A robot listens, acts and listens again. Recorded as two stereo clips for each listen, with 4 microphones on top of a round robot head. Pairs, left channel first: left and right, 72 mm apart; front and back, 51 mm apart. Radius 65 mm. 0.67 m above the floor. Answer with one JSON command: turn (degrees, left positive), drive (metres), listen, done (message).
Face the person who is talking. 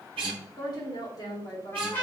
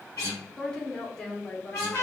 {"turn": 75}
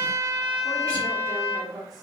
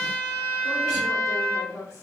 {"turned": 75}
{"done": "Facing the woman speaking, 1 to 2 m away."}